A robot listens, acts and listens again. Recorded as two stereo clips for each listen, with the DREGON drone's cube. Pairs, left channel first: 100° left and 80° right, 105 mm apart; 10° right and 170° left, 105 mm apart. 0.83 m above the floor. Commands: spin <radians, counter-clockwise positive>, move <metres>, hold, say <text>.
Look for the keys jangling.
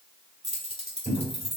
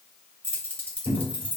spin -1.48
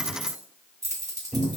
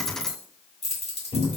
spin -0.35
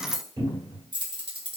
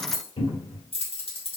spin -0.70
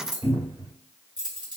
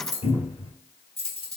spin -0.52
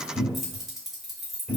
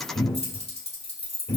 spin 0.17
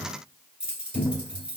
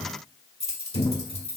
say Found it: keys jangling, straight ahead, 1 to 2 m away.